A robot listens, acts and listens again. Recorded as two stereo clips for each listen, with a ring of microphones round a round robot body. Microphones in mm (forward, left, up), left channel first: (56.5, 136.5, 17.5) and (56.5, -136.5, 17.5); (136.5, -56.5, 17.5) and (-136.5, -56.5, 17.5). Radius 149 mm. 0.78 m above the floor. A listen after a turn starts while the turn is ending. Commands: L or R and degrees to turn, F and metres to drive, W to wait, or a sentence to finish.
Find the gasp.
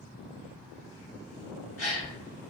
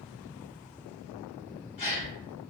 L30
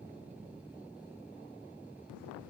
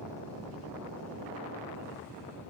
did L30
Facing where the gasp came from. I can't hear it now.